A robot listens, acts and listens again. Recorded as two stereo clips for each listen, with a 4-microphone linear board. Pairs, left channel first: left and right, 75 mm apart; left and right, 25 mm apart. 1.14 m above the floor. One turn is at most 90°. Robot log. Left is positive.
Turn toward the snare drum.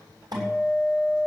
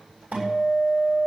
cmd idle
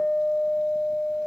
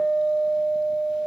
cmd idle
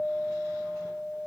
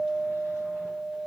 end: I can't make out a snare drum, only a guitar.